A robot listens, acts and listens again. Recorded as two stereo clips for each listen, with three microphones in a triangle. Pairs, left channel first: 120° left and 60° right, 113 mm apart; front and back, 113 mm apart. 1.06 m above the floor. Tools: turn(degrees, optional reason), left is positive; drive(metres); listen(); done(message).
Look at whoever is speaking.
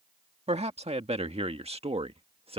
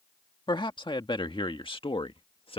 turn(degrees=-30, reason="The man speaking: 30° right.")
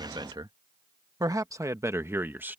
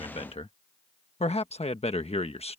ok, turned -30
turn(degrees=10, reason="The man speaking is now 10° left.")
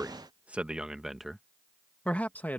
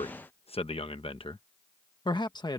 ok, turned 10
turn(degrees=45, reason="The man speaking is now 45° left.")
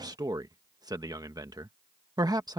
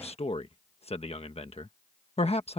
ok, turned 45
turn(degrees=-10, reason="The man speaking is now 10° right.")
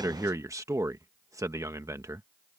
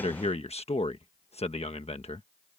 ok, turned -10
done("Facing the man speaking.")